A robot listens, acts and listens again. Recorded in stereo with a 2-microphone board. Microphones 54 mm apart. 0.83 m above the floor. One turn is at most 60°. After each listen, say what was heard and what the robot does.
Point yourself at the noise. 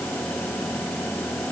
Keep listening.
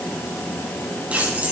The keys jangling: about 30° right or 150° right. Turn 30° right.
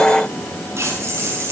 So it is at 115° right. Turn 60° right.
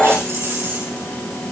The keys jangling is now 55° right. Turn 55° right.
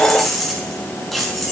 Found it: keys jangling, straight ahead, over 4 m away.